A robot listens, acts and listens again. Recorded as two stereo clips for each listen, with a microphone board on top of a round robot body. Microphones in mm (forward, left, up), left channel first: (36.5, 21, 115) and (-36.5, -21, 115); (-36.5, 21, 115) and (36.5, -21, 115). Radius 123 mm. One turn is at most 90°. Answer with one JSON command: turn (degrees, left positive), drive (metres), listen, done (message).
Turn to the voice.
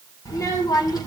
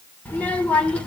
{"turn": 75}
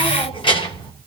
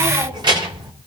{"done": "Facing the child speaking, 2 to 4 m away."}